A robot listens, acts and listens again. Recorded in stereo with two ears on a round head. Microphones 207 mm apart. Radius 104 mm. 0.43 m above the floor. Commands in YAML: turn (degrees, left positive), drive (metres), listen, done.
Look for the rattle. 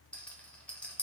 turn: 30
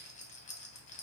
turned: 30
turn: 140
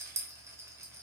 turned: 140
turn: -15
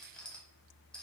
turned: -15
done: "Found it: a rattle, straight ahead, under 1 m away."